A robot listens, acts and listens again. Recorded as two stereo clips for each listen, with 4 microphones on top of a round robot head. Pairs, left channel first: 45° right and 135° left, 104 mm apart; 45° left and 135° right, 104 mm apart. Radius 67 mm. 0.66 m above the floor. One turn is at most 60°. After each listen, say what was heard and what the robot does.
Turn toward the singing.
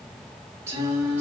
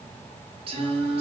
The singing: 155° right. Turn 60° right.
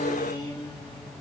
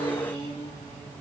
The singing is now 90° right. Turn 60° right.
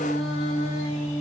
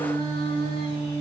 Found it: singing, straight ahead, 2 to 4 m away.